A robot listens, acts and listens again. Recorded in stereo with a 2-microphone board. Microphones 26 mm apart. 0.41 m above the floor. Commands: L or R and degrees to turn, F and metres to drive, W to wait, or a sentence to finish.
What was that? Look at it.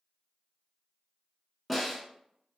R30
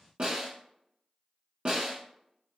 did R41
R135
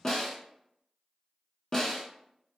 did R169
L30
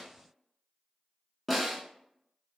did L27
Facing the snare drum.